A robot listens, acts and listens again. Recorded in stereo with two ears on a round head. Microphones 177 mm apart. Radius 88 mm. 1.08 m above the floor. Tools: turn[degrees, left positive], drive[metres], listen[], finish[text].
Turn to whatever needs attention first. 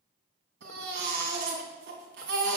Thought: The baby crying: about 60° right or 120° right.
Action: turn[-60]
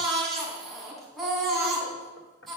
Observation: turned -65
Action: finish[Facing the baby crying, 2 to 4 m away.]